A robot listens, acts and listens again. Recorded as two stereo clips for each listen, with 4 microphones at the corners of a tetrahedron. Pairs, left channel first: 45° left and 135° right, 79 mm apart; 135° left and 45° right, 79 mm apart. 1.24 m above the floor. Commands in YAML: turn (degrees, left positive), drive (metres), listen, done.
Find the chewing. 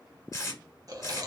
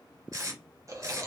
turn: -95
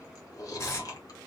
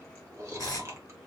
done: "Facing the chewing, under 1 m away."